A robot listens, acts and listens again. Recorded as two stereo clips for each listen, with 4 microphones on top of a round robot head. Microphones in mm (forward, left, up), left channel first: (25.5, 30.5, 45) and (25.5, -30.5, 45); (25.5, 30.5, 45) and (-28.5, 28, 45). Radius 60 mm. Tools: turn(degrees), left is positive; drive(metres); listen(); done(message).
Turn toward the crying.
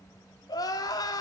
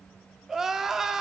turn(degrees=105)
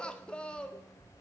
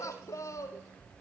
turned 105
turn(degrees=15)
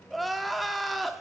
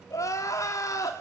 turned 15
done("Found it: crying, straight ahead.")